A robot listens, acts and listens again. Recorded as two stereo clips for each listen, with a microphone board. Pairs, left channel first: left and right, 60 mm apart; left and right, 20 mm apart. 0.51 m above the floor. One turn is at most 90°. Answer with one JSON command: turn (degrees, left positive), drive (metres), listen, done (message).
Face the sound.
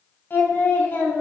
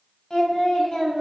{"turn": 35}
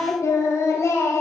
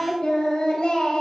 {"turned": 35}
{"turn": 90}
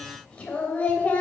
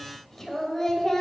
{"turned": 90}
{"turn": 25}
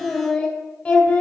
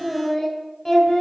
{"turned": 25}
{"turn": 25}
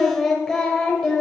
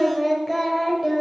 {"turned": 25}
{"turn": 10}
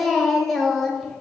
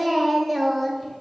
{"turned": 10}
{"done": "Facing the singing, 2 to 4 m away."}